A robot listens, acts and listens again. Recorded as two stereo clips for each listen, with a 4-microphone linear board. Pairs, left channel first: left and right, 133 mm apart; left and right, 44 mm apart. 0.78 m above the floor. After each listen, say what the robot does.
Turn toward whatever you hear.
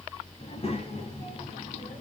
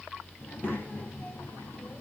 Turn 45° left.
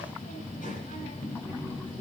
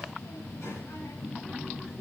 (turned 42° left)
Turn 105° left.
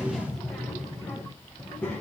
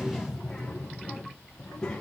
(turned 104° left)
Turn 15° left.
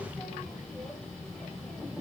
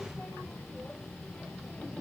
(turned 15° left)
Found it: a child speaking, straight ahead, 2 to 4 m away.